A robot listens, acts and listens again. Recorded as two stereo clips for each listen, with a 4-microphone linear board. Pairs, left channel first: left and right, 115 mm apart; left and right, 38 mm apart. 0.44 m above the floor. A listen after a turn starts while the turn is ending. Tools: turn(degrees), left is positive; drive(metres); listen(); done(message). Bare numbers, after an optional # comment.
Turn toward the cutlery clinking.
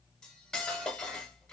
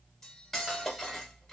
turn(30)
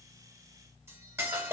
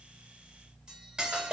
# So it is at 25° right.
turn(-25)
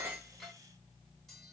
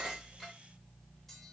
listen()
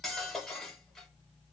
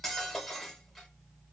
done("Facing the cutlery clinking, 1 to 2 m away.")